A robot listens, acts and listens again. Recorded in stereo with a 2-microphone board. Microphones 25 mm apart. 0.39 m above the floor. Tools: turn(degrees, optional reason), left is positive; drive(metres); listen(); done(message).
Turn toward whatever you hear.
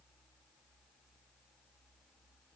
listen()
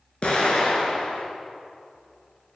turn(degrees=45, reason="The explosion: about 45° left or 135° left.")
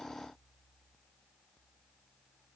listen()
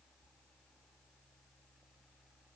done("I heard an explosion, but can't make it out now. It was about straight ahead or 90° left.")